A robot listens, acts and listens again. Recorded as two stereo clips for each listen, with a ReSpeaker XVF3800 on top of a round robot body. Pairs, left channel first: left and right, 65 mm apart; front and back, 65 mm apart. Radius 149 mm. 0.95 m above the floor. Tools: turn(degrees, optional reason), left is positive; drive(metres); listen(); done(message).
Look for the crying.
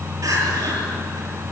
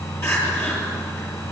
turn(degrees=-50, reason="The crying: 50° right.")
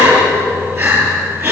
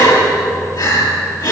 turn(degrees=-25, reason="The crying is now 25° right.")
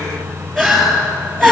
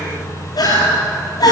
done("Facing the crying, over 4 m away.")